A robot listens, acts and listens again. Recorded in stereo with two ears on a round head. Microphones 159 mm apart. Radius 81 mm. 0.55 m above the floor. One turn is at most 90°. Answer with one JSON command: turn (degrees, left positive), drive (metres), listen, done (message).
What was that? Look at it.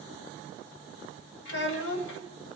{"turn": 70}
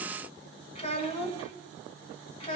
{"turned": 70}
{"turn": 30}
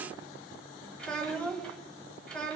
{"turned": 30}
{"done": "Facing the child speaking."}